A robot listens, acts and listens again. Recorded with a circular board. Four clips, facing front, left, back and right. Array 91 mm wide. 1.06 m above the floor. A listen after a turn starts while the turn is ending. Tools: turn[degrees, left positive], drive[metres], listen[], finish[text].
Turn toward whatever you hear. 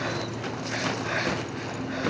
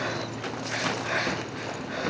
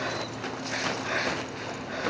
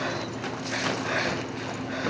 Action: listen[]
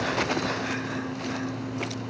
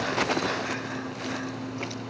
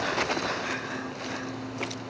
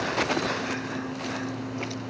Action: listen[]
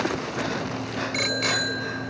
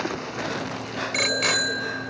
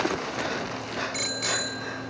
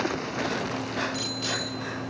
Thought: The bicycle bell: 65° left.
Action: turn[65]
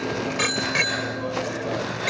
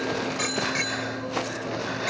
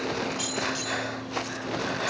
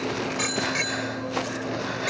Action: finish[Facing the bicycle bell.]